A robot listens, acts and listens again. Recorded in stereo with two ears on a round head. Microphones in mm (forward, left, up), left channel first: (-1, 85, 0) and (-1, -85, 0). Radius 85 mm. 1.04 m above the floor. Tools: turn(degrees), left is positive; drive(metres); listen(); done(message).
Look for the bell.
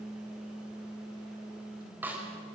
listen()
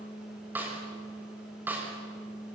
listen()
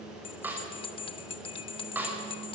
turn(degrees=30)
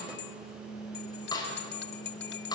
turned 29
turn(degrees=120)
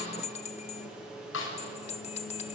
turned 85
turn(degrees=35)
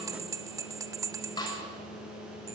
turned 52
turn(degrees=-20)
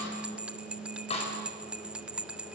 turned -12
done("Facing the bell.")